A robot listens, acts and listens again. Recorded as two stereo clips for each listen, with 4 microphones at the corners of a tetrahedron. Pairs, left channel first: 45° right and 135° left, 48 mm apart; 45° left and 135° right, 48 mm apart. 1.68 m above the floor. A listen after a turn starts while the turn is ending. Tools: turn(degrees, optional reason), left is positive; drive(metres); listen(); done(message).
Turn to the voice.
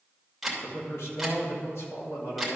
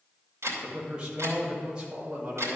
turn(degrees=-65, reason="The man speaking: 65° right.")
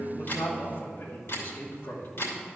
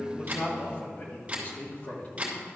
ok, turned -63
done("Facing the man speaking.")